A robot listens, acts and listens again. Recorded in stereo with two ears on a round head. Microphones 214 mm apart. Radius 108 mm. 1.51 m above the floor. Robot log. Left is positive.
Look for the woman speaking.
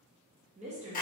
note: The woman speaking: about 25° right or 155° right.
cmd yaw -25
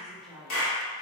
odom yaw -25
end: Found it: a woman speaking, straight ahead.